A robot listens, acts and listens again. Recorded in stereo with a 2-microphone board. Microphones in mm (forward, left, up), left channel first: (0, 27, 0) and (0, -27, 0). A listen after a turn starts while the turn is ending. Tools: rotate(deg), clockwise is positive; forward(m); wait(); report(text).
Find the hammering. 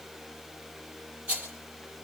wait()
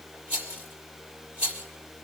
wait()
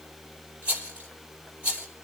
report("I can't make out hammering to turn to.")